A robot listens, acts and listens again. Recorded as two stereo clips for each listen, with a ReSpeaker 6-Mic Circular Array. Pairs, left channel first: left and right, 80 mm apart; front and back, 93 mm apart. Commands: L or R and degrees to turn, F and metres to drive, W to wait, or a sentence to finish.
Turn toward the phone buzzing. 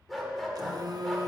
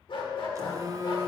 R125
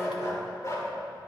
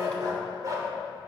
W
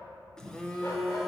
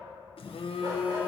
L10
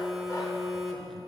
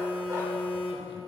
Facing the phone buzzing, under 1 m away.